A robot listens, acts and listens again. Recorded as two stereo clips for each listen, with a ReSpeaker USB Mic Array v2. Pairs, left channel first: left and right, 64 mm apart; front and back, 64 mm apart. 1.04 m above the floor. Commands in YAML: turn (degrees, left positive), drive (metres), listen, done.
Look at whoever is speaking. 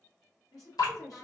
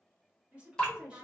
turn: 110
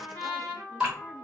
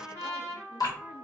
listen: true
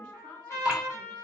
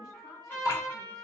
turn: 15
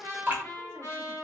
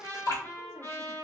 listen: true
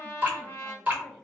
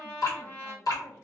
turn: 10
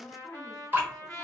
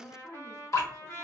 done: "Found it: a woman speaking, straight ahead."